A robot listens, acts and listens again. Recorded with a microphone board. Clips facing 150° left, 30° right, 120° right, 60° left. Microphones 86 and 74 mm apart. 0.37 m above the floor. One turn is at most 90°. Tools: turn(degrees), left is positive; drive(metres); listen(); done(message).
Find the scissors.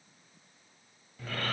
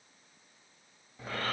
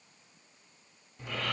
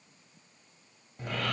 listen()
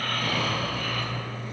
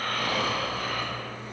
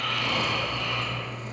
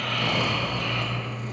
listen()
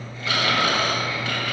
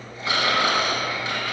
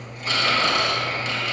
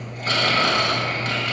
done("I can't make out scissors to turn to.")